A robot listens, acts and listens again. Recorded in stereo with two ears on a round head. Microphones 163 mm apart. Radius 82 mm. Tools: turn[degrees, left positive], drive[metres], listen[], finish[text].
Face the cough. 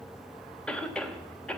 Action: turn[30]
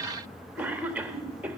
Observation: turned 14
Thought: So it is at 10° right.
Action: turn[-10]
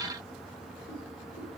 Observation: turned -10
Action: listen[]
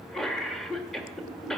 Action: finish[Facing the cough, 1 to 2 m away.]